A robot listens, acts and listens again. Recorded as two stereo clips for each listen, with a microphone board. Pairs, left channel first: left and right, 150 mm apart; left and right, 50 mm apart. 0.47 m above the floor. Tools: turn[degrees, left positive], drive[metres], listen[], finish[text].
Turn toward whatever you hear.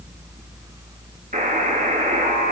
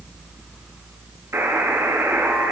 Thought: The buzzer: about 60° right or 120° right.
Action: turn[-60]
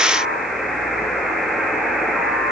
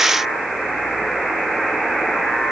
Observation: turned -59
Action: finish[Facing the buzzer.]